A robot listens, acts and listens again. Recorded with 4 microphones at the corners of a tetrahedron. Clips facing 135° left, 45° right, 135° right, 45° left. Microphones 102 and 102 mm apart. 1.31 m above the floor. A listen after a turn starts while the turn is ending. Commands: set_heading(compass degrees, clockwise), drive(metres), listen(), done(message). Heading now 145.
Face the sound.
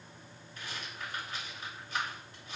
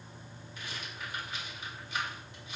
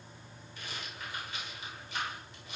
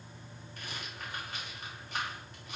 set_heading(55)
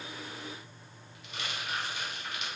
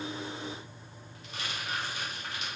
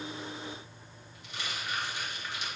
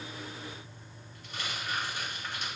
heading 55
done("Facing the rattle, over 4 m away.")